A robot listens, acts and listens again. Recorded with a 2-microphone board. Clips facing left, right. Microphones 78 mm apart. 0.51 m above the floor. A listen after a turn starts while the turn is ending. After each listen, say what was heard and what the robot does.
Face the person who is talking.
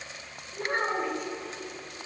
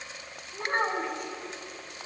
The child speaking: about 50° right or 130° right. Turn 50° right.
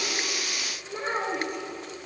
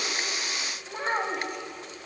So it is at 60° right. Turn 60° right.
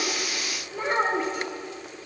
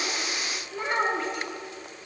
The child speaking is now 15° left. Turn 15° left.
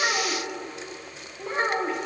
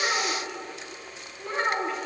The child speaking is now 15° left. Turn 15° left.
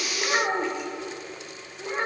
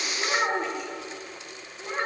Found it: a child speaking, straight ahead, 1 to 2 m away.